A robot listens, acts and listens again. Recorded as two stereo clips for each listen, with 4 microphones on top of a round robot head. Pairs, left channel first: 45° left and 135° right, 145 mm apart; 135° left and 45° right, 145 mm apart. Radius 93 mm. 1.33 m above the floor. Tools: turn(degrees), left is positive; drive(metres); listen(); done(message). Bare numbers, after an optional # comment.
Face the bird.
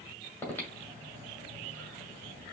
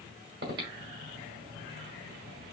listen()
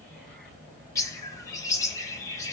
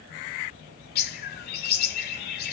# The bird: 115° left.
turn(115)
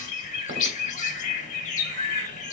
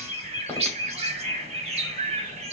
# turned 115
done("Found it: a bird, straight ahead, under 1 m away.")